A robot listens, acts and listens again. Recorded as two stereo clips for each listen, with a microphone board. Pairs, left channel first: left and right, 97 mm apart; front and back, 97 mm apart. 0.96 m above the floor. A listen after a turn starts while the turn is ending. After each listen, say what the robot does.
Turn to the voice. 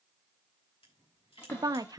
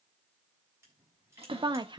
Turn 140° right.
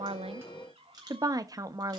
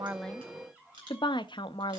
Turn 40° right.
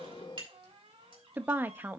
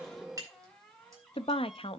Turn 20° right.
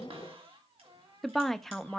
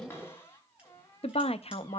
Found it: a woman speaking, straight ahead.